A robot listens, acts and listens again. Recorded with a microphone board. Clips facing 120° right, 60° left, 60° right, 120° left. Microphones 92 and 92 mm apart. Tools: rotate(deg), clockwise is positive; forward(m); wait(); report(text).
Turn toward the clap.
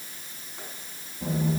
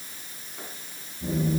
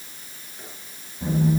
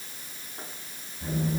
wait()
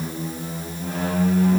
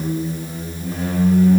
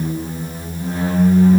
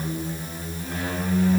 wait()
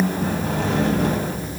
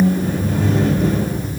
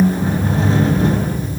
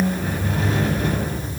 report("I can't make out a clap, only a squeak.")